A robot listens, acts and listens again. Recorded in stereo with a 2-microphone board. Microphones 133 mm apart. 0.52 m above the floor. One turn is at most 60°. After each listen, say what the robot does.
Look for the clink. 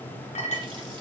Turn 60° left.
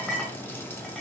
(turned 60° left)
Found it: a clink, straight ahead, 2 to 4 m away.